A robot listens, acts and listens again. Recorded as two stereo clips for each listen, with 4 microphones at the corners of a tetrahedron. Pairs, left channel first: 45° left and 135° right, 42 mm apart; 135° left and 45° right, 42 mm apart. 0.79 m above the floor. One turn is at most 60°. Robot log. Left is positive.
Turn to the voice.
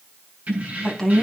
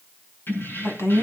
note: The woman speaking: 130° left.
cmd yaw +60
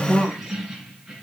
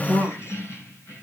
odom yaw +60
note: The woman speaking is now 90° left.
cmd yaw +60
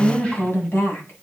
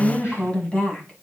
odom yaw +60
note: The woman speaking is now 70° left.
cmd yaw +60
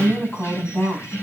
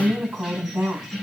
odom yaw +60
end: Found it: a woman speaking, straight ahead, over 4 m away.